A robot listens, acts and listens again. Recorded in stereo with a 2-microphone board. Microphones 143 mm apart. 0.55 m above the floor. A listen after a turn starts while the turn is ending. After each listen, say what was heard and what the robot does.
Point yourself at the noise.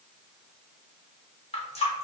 The running tap: about 45° left or 135° left. Turn 45° left.
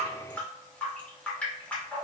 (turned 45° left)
So it is at 10° left. Turn 10° left.
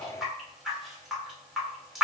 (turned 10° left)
Found it: a running tap, straight ahead, 1 to 2 m away.